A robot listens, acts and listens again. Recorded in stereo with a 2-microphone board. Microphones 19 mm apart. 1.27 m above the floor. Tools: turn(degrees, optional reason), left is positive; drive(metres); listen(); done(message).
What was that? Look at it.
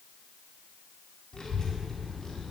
turn(degrees=35, reason="The child speaking: about 35° left or 145° left.")
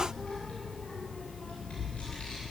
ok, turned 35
turn(degrees=110, reason="So it is at 110° left.")
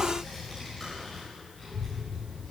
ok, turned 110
turn(degrees=20, reason="The child speaking is now 20° left.")
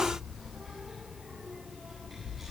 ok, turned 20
done("Found it: a child speaking, straight ahead, over 4 m away.")